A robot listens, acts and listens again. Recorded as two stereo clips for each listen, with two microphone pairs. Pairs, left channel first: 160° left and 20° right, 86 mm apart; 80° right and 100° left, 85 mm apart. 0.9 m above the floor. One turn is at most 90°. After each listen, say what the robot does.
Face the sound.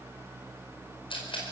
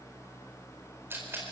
Turn 90° left.
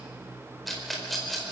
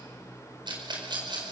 Turn 75° left.
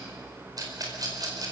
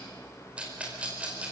Turn 25° left.
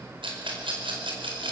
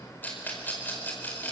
Turn 10° right.
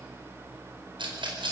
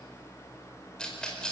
Found it: a rattle, straight ahead, over 4 m away.